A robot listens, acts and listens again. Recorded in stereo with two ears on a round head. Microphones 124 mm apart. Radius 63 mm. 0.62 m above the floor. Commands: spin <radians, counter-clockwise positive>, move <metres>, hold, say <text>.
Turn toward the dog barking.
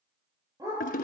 spin -0.44
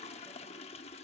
hold
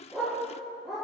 say Found it: a dog barking, straight ahead.